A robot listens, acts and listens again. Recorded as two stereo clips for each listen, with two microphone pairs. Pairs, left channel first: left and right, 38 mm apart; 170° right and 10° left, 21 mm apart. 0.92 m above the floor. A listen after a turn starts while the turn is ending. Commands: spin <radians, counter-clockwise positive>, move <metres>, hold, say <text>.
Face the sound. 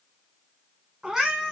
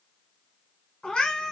spin -2.88
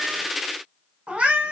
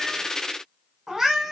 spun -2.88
spin -0.96
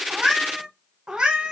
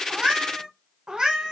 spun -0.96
spin -0.52
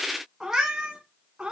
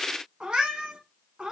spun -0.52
spin -0.44
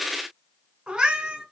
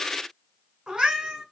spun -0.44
spin -0.44
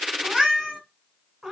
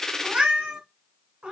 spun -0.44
say Found it: a cat meowing, straight ahead, 1 to 2 m away.